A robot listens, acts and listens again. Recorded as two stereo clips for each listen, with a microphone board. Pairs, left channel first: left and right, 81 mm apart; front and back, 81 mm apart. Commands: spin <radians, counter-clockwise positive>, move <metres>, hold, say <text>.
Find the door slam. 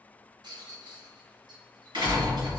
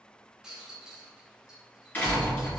spin -1.22
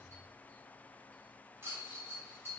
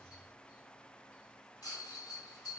say Facing where the door slam came from. I can't hear it now.